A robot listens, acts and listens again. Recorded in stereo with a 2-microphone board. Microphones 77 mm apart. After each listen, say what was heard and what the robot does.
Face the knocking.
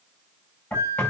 The knocking: about 15° left or 165° left. Turn 15° left.
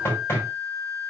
So it is at 150° left. Turn 150° left.
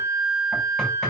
Keep listening.
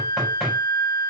Found it: knocking, straight ahead, over 4 m away.